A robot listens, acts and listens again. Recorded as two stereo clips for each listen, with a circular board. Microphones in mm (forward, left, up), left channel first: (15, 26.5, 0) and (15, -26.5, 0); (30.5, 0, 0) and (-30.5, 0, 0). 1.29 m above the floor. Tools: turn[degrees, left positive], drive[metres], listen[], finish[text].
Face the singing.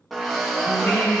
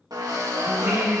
Thought: The singing: 120° left.
Action: turn[120]
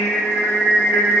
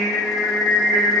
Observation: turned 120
Thought: The singing is now 20° left.
Action: turn[20]
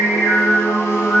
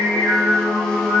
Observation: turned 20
Action: finish[Found it: singing, straight ahead, over 4 m away.]